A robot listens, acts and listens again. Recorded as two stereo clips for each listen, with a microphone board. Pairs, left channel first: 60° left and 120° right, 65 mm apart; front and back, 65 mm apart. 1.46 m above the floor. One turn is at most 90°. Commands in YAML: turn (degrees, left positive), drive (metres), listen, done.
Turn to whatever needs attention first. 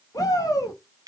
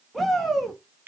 turn: 90
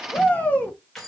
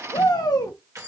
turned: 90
done: "Found it: a shout, straight ahead."